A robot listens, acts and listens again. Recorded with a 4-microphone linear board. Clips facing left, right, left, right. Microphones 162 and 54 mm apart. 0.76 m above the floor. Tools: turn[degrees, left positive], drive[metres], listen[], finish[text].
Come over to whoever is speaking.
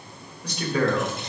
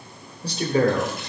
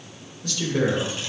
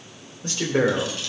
Thought: The man speaking: about 35° right or 145° right.
Action: turn[-35]
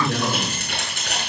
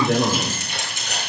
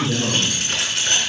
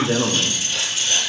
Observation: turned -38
Thought: So it is at 110° right.
Action: turn[-110]
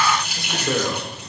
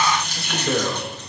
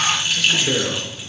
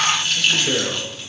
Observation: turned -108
Action: drive[1.0]
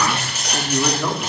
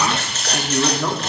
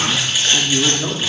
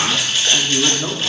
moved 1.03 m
Action: drive[1.0]
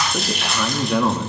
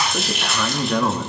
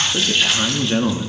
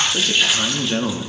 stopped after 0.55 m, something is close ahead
Action: finish[I am next to the man speaking.]